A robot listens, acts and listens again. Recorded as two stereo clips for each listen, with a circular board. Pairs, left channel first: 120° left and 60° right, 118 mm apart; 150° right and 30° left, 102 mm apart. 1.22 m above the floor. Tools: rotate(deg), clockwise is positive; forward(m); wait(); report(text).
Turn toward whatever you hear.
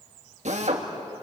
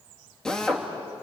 rotate(65)
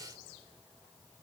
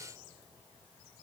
wait()
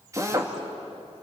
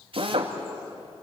report("Facing the drill.")